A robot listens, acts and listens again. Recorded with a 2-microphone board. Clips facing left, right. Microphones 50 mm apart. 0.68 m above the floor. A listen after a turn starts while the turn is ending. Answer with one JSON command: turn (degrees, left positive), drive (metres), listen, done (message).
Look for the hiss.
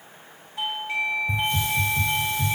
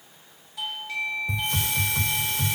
{"turn": -90}
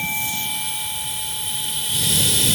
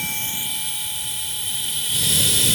{"done": "Facing the hiss."}